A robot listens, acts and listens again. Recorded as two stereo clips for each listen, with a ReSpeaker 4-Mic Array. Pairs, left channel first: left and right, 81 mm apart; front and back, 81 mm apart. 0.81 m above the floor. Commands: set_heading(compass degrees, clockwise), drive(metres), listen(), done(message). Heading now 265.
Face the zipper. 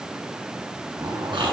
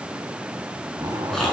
set_heading(35)
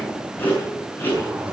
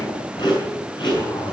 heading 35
set_heading(55)
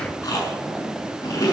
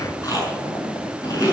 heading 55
done("Facing the zipper.")